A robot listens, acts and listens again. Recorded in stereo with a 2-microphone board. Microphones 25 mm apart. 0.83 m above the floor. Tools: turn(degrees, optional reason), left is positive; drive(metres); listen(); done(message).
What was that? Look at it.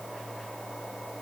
listen()
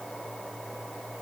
listen()
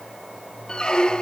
turn(degrees=35, reason="The squeak: about 35° left or 145° left.")
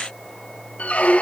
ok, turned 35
turn(degrees=110, reason="So it is at 110° left.")
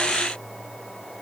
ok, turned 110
listen()
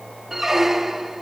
turn(degrees=-15, reason="The squeak is now 15° right.")
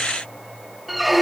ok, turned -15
done("Found it: a squeak, straight ahead, 1 to 2 m away.")